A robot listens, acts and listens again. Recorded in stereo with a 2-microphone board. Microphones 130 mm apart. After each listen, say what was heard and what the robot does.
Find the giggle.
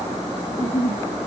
The giggle: about 20° left or 160° left. Turn 20° left.
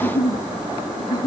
So it is at 145° left. Turn 145° left.
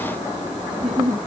Found it: a giggle, straight ahead.